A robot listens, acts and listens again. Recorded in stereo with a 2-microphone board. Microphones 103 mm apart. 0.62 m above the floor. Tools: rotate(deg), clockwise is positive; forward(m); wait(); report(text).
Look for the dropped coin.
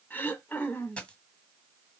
rotate(-30)
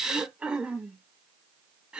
wait()
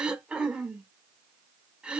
report("I heard a dropped coin, but can't make it out now. It was about 20° right or 140° left.")